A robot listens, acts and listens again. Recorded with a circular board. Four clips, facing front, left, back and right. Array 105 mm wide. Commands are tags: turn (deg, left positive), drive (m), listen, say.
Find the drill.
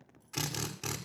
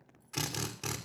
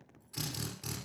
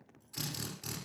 <turn deg="50"/>
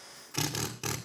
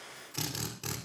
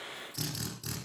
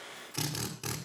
<turn deg="-10"/>
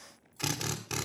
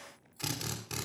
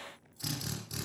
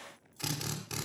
<say>Found it: a drill, straight ahead, 2 to 4 m away.</say>